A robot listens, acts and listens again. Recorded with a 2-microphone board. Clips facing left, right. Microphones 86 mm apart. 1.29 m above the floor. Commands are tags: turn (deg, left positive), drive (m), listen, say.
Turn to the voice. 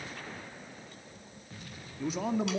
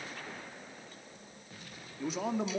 <turn deg="30"/>
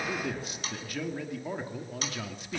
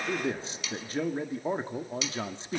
<turn deg="-30"/>
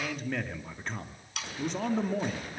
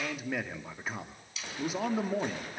<turn deg="-10"/>
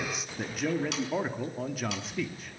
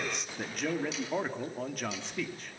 <say>Found it: a man speaking, straight ahead, 2 to 4 m away.</say>